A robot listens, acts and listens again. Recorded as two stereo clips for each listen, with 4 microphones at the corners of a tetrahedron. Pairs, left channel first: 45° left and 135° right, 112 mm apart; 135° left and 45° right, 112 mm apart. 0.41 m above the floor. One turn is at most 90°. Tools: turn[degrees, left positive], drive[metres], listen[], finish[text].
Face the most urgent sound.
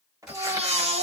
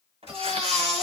Thought: The baby crying: 135° right.
Action: turn[-90]
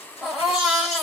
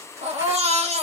Thought: The baby crying is now 45° right.
Action: turn[-45]
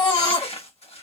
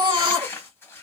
Action: finish[Found it: a baby crying, straight ahead.]